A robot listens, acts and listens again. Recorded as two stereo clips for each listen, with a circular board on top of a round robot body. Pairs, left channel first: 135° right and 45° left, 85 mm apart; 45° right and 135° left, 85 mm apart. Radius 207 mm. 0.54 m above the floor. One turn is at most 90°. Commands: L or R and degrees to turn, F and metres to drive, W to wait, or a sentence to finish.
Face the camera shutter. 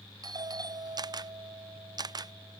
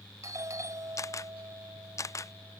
L10
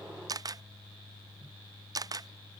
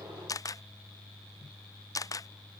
Facing the camera shutter.